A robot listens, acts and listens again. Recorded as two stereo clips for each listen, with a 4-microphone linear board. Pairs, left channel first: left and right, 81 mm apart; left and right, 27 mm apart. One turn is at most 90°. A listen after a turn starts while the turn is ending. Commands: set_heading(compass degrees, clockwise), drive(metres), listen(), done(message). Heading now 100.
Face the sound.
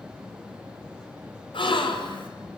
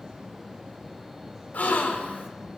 set_heading(30)
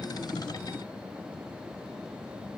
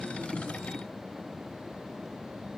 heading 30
listen()
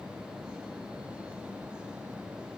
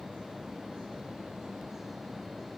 done("I heard a gasp, but can't make it out now. It was about straight ahead or 40° left.")